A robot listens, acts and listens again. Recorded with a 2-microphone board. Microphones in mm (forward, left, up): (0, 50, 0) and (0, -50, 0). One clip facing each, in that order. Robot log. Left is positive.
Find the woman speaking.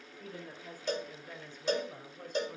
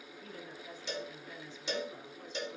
note: The woman speaking: about 50° left or 130° left.
cmd yaw +50
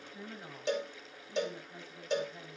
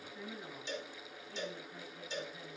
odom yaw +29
note: So it is at 25° left.
cmd yaw +25
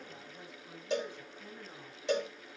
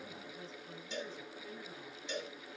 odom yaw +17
note: The woman speaking is now 10° left.
cmd yaw +10
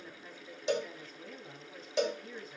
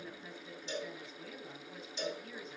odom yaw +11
end: Found it: a woman speaking, straight ahead.